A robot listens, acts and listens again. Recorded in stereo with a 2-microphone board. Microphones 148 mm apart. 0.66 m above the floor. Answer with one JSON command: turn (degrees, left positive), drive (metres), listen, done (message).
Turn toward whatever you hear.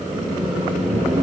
{"turn": -30}
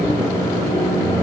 {"turn": 25}
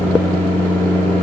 {"turn": 15}
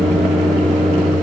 {"done": "Found it: a microwave, straight ahead, under 1 m away."}